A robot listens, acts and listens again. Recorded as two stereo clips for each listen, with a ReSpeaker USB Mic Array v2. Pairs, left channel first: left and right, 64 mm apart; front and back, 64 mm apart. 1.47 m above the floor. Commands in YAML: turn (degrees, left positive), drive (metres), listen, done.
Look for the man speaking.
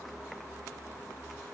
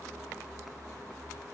listen: true
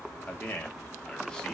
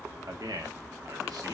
turn: 170
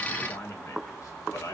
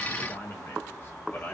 turn: 60
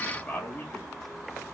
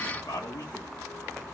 turn: 20
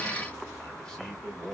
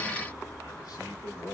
turn: 10
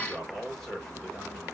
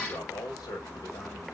done: "Facing the man speaking, 2 to 4 m away."